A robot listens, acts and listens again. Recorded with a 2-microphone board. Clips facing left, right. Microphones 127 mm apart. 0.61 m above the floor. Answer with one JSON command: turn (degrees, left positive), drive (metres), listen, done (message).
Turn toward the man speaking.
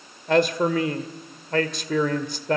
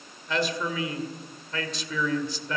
{"turn": 55}
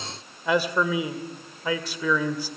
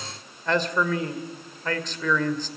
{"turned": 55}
{"turn": 10}
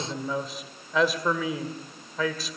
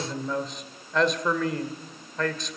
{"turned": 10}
{"done": "Found it: a man speaking, straight ahead."}